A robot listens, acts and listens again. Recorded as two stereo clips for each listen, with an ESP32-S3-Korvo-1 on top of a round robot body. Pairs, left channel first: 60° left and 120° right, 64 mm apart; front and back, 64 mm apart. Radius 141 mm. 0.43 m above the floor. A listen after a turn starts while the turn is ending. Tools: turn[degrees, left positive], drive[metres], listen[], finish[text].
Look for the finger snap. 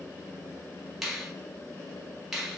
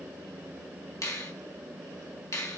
Thought: The finger snap: 35° right.
Action: turn[-35]
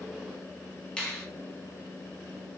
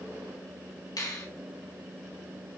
Thought: The finger snap is now 15° right.
Action: turn[-15]
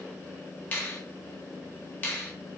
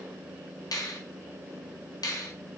Action: finish[Found it: a finger snap, straight ahead, 2 to 4 m away.]